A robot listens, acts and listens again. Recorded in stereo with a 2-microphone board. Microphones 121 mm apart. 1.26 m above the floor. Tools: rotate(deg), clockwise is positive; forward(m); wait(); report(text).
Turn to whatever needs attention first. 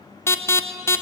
rotate(-20)
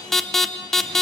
report("Facing the alarm, under 1 m away.")